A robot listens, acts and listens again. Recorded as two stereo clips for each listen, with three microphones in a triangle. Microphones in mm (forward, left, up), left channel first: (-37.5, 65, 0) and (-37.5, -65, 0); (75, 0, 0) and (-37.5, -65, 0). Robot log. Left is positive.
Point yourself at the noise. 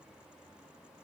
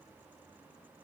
cmd idle
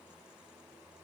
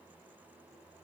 cmd idle
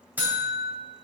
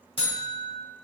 note: The buzzer: 15° right.
cmd yaw -15
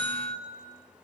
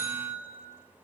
end: Facing the buzzer.